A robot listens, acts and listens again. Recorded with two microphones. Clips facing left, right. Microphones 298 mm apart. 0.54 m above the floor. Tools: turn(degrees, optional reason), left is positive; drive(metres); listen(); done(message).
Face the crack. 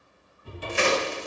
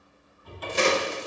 turn(degrees=-45, reason="The crack: about 45° right or 135° right.")
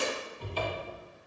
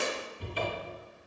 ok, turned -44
listen()
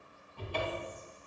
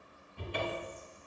done("I heard a crack, but can't make it out now. It was about straight ahead or 90° right.")